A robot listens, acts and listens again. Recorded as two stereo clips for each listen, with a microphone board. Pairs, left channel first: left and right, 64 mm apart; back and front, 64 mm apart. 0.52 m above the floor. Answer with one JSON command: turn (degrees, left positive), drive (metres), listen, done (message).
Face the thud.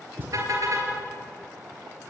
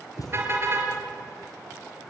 {"turn": -150}
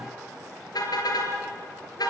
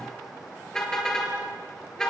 {"done": "Facing where the thud came from. I can't hear it now."}